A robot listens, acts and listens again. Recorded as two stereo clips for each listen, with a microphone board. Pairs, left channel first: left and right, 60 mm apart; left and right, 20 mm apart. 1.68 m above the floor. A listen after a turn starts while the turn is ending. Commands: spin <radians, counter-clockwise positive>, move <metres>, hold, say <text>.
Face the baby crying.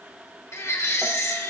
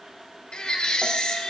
spin 0.87
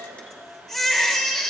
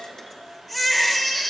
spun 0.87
spin 0.17
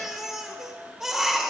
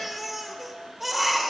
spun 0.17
say Facing the baby crying.